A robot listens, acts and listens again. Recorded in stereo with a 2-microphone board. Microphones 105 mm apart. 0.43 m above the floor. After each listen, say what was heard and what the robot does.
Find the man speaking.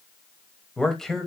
Turn 30° left.
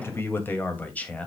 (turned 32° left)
Turn 30° left.
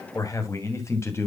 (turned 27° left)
So it is at 155° left. Turn 155° left.
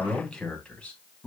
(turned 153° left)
The man speaking is now 10° left. Turn 10° left.
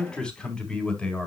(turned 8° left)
The man speaking is now 10° left. Turn 10° left.
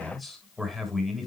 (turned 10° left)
Facing the man speaking.